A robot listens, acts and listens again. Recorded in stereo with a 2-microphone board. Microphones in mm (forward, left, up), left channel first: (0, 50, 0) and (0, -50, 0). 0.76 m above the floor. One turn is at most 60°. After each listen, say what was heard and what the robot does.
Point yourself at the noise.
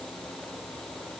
Keep listening.
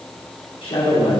The man speaking: about 60° left or 120° left. Turn 60° left.
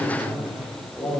Facing the man speaking, 2 to 4 m away.